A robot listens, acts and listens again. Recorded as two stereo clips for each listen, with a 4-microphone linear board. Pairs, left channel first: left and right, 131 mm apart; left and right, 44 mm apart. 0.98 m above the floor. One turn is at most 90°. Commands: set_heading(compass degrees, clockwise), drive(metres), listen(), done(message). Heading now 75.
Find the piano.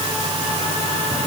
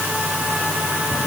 listen()
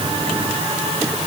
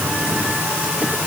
listen()
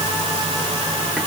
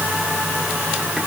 done("I can't make out a piano to turn to.")